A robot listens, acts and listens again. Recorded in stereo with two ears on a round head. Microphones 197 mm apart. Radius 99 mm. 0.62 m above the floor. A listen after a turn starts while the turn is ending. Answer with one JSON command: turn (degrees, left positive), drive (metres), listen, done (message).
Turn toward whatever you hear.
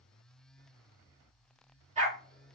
{"turn": -35}
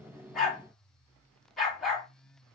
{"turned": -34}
{"done": "Facing the dog barking."}